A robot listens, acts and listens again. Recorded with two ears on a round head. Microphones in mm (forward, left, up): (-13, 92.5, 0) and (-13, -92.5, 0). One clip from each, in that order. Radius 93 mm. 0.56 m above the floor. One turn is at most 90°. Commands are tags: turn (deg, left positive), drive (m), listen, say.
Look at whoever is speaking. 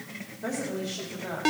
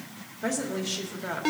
<turn deg="-55"/>
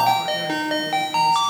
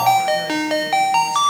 <listen/>
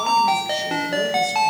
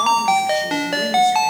<listen/>
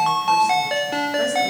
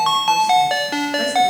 <say>I heard a woman speaking, but can't make it out now. It was about straight ahead or 70° right.</say>